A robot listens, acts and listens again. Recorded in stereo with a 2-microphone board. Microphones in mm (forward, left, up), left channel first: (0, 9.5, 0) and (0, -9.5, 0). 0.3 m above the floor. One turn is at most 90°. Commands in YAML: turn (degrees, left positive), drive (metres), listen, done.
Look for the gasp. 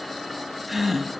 turn: -30
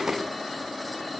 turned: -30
listen: true
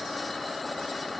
done: "I heard a gasp, but can't make it out now. It was about 25° left or 145° right."